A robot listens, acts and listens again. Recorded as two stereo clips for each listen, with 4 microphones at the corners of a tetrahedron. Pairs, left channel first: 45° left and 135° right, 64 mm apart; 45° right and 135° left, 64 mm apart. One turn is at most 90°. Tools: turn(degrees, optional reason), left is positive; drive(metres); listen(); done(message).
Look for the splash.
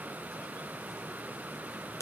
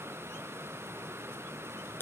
listen()
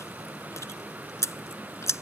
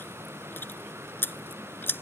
listen()
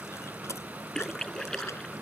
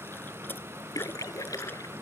turn(degrees=-35, reason="The splash: 35° right.")
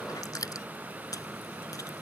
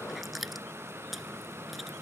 done("Facing where the splash came from. I can't hear it now.")